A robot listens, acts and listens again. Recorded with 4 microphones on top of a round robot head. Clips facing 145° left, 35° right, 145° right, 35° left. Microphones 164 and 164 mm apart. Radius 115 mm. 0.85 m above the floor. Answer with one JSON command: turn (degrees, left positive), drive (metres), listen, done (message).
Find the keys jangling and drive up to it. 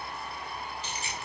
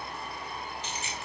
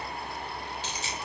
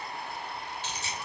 {"turn": -155}
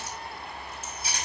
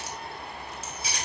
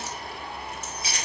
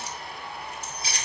{"turn": -25}
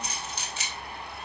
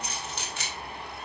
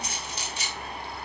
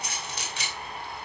{"drive": 1.0}
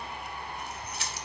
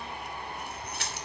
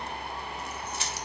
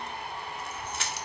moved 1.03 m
{"drive": 1.0}
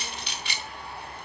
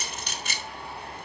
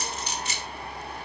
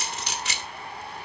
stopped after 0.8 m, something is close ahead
{"turn": 10}
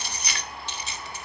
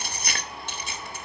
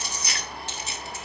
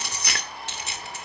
{"done": "Arrived at the keys jangling, straight ahead."}